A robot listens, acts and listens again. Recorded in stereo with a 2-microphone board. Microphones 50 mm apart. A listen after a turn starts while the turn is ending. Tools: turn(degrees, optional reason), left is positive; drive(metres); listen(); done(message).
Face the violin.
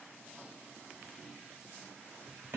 listen()
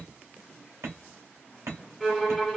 turn(degrees=30)
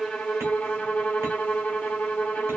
turn(degrees=150, reason="So it is at 150° left.")
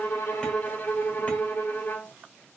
turn(degrees=55, reason="The violin is now 55° left.")
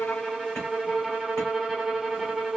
done("Facing the violin, under 1 m away.")